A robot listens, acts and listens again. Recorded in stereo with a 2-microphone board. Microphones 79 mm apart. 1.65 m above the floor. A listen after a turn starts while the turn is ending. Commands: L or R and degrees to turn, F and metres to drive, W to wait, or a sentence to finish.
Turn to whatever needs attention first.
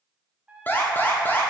L25
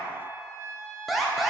Facing the alarm.